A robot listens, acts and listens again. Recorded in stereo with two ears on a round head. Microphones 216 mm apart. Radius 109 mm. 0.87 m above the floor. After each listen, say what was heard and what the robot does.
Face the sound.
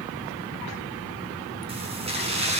The keys jangling: about 30° right or 150° right. Turn 30° right.
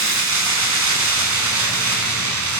So it is at 110° right. Turn 110° right.
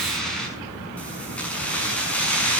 Found it: keys jangling, straight ahead, over 4 m away.